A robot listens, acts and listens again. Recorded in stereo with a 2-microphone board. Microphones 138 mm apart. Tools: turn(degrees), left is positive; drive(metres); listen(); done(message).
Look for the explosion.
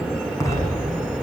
turn(degrees=20)
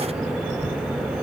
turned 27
listen()
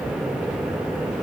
done("I heard an explosion, but can't make it out now. It was about 5° right or 130° left.")